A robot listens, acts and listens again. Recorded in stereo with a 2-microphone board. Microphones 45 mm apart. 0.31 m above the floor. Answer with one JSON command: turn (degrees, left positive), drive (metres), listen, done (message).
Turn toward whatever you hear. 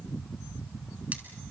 {"listen": true}
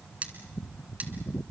{"turn": -30}
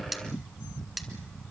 {"done": "Facing the cutlery clinking, 1 to 2 m away."}